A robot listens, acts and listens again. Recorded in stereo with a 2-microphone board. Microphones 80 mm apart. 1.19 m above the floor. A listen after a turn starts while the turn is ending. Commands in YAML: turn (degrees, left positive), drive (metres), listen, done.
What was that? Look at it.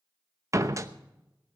turn: -40
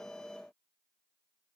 listen: true
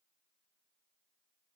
done: "I heard a door slam, but can't make it out now. It was about straight ahead or 100° right."